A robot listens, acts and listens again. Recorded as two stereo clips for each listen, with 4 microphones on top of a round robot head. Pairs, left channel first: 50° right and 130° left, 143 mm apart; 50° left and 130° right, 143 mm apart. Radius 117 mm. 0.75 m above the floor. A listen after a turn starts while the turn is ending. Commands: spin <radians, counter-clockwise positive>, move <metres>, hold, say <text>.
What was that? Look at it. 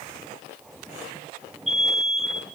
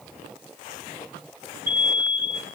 spin -2.44
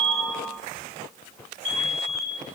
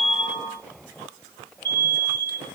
spin -0.52
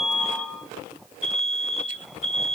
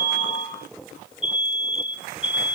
say Found it: an alarm, straight ahead, over 4 m away.